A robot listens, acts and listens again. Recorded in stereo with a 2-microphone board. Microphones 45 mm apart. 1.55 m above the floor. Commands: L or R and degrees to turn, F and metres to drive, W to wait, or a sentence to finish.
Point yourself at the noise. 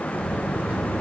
R30
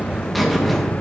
Facing the buzzer.